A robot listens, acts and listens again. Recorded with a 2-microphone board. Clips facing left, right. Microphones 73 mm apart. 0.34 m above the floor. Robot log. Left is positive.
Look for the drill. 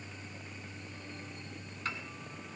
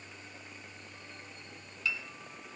cmd idle
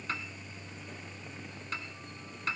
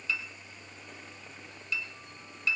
cmd idle
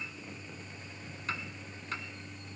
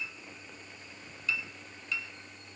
end: I can't make out a drill, only a piano.